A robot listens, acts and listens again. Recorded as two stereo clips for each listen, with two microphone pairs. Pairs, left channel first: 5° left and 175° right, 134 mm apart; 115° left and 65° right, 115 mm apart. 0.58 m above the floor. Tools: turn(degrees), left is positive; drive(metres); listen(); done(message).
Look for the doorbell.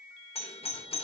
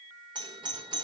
turn(degrees=-25)
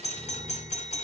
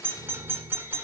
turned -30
done("Found it: a doorbell, straight ahead.")